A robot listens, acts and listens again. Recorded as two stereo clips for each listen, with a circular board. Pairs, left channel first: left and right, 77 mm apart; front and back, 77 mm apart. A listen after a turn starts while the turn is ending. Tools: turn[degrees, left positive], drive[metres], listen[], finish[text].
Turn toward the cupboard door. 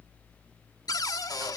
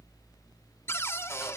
Thought: The cupboard door: 55° left.
Action: turn[55]
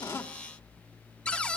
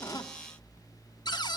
Thought: The cupboard door is now 15° left.
Action: turn[15]
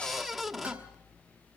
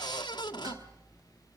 Action: finish[Facing the cupboard door.]